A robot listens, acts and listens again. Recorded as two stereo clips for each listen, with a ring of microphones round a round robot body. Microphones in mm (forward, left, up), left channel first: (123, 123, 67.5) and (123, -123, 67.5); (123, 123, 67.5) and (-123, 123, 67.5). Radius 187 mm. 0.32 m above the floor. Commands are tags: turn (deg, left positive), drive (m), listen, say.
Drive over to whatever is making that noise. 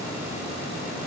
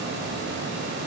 <listen/>
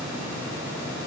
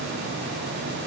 <listen/>
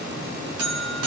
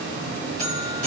<turn deg="-115"/>
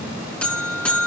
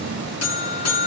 <drive m="1.0"/>
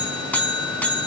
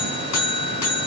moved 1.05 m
<drive m="1.0"/>
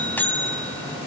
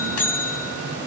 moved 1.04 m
<turn deg="10"/>
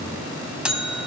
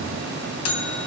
<drive m="1.0"/>
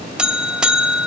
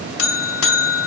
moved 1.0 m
<drive m="1.0"/>
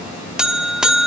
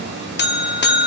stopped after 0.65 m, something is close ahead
<say>I am next to the buzzer.</say>